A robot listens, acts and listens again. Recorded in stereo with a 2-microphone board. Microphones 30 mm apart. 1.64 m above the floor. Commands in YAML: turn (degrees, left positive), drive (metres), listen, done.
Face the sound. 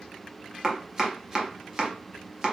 turn: -20
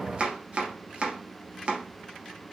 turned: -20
turn: -140
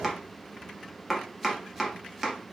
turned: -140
done: "Facing the chopping."